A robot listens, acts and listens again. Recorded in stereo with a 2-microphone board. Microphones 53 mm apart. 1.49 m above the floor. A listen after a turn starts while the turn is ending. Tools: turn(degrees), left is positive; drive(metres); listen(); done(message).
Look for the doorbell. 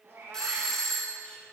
turn(degrees=30)
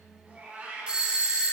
turn(degrees=-15)
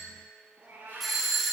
done("Facing the doorbell, 1 to 2 m away.")